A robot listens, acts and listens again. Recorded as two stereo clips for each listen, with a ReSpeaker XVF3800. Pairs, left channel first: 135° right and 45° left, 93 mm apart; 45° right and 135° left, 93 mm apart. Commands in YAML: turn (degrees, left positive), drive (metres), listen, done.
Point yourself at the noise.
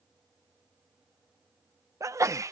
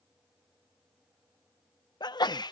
turn: -10
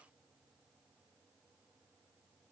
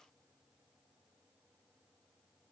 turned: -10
done: "I heard a sneeze from this way, but can't make it out now."